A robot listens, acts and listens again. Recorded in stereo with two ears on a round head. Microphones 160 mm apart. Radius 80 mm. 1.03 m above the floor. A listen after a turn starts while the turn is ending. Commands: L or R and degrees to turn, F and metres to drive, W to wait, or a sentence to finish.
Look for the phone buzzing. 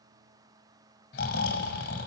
W
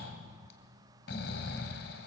W
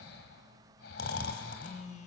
L45
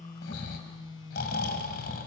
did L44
L90
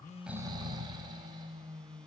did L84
Found it: a phone buzzing, straight ahead.